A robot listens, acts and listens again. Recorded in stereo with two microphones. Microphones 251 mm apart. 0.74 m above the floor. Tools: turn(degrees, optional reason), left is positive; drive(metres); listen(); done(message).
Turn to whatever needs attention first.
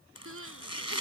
turn(degrees=-60, reason="The crying: about 60° right or 120° right.")
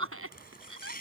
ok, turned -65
turn(degrees=-60, reason="So it is at 60° right.")
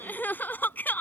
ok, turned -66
done("Found it: crying, straight ahead.")